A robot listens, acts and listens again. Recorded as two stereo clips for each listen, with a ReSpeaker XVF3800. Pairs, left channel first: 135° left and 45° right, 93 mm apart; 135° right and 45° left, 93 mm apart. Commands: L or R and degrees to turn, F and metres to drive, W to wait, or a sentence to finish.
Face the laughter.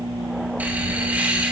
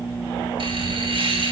L30
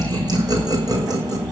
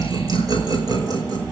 Found it: laughter, straight ahead.